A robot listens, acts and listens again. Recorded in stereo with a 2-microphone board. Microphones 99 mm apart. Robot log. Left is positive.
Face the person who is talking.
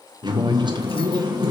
note: The man speaking: about 50° right or 130° right.
cmd yaw -50
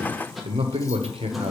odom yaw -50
note: So it is at 75° right.
cmd yaw -75
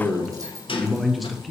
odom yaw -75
end: Found it: a man speaking, straight ahead, 1 to 2 m away.